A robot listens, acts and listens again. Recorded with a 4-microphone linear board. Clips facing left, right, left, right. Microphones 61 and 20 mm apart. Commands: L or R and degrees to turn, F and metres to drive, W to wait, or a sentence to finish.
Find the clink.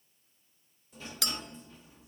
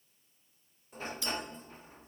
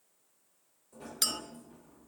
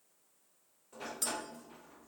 L70
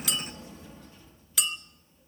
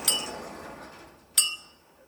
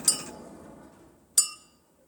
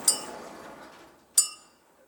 Facing the clink, under 1 m away.